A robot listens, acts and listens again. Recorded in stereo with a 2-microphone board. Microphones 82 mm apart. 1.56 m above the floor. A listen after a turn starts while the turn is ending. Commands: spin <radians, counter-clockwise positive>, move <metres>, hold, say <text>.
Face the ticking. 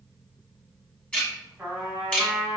spin 0.52
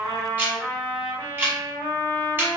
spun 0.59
spin -0.35
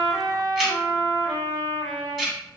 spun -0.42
say Facing the ticking, 1 to 2 m away.